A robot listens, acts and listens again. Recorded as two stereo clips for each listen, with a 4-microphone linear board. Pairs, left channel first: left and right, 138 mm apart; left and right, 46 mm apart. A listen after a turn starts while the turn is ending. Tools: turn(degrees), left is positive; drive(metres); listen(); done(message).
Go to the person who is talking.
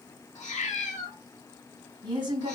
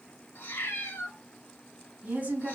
turn(degrees=-30)
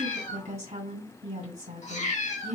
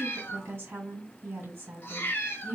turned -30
turn(degrees=-115)
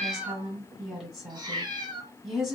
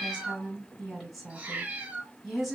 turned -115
drive(metres=1.0)
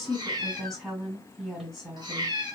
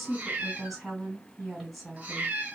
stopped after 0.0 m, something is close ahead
done("Something is in my way. I am facing the woman speaking but have not reached it.")